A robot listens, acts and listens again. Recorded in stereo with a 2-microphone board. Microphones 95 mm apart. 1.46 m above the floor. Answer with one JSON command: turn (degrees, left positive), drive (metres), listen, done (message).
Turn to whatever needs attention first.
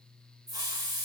{"listen": true}
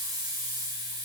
{"listen": true}
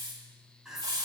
{"turn": -30}
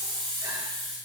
{"listen": true}
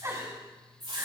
{"turn": -140}
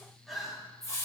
{"done": "Found it: crying, straight ahead, 2 to 4 m away."}